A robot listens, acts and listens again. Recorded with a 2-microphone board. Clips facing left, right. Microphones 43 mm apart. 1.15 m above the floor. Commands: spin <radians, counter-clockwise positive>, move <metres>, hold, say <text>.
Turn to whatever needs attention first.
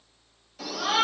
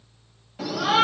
spin -0.35
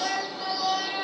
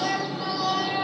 say Found it: a shout, straight ahead.